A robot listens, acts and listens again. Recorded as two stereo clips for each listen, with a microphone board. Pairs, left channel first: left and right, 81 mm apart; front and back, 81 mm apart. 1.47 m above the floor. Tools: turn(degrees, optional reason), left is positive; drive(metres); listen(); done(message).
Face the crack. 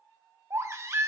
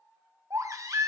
listen()
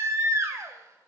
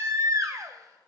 listen()
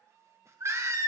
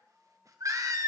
done("I can't make out a crack, only a baby crying.")